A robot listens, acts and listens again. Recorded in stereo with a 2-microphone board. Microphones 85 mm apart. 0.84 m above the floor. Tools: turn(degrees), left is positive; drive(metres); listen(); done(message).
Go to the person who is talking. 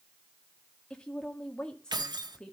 turn(degrees=30)
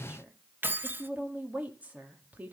turn(degrees=-20)
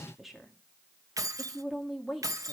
drive(metres=1.0)
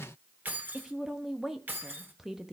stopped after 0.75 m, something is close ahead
done("Arrived at the woman speaking, straight ahead.")